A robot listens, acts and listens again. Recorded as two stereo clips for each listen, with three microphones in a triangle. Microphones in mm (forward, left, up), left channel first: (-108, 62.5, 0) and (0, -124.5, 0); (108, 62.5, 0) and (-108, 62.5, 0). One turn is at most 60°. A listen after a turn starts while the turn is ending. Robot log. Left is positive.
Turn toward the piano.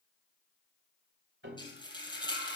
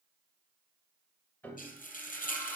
note: The piano: 80° right.
cmd yaw -60
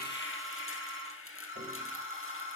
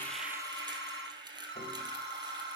note: Nothing new. It was at 20° right.
cmd yaw -20
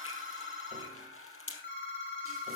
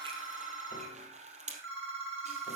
cmd idle
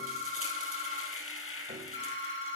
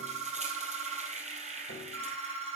end: Facing where the piano came from. I can't hear it now.